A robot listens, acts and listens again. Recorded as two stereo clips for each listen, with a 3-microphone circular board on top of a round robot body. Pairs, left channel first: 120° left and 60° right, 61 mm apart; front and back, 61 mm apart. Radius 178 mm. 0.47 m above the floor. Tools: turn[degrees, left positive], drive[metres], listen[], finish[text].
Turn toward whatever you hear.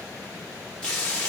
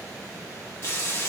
Thought: The frying: 45° left.
Action: turn[45]
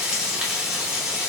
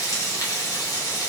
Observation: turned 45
Thought: The frying is now 20° left.
Action: turn[20]
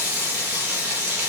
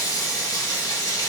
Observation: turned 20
Action: finish[Found it: frying, straight ahead.]